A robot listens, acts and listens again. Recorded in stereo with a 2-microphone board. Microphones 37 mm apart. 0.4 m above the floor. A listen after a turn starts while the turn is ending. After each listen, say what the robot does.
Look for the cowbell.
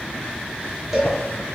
Turn 30° right.
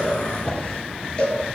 Turn 25° left.
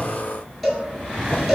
Facing the cowbell.